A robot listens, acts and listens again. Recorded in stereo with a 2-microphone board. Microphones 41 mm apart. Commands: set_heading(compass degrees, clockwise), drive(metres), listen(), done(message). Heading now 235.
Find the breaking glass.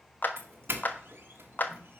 listen()
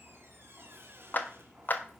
listen()
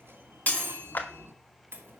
set_heading(195)
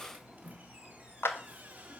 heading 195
listen()
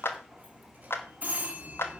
done("I heard breaking glass, but can't make it out now. It was about straight ahead or 100° left.")